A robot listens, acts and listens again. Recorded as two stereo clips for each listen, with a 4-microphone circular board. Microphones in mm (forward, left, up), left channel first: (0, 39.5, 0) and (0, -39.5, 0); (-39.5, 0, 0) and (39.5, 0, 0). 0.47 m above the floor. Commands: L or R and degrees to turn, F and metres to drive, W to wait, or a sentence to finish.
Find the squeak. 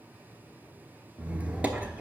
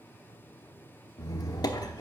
R160
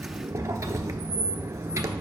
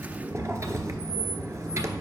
R45
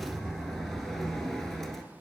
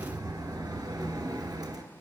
Facing the squeak, under 1 m away.